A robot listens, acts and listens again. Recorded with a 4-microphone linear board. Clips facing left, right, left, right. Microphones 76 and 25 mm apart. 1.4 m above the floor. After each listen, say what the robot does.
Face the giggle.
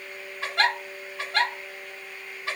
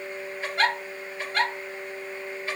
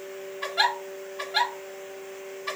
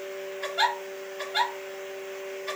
Turn 90° left.
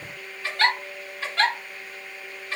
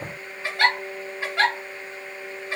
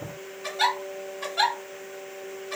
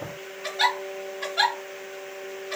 Turn 15° right.
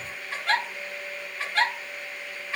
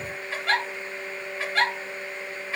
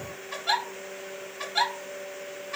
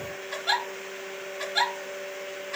Facing the giggle, 1 to 2 m away.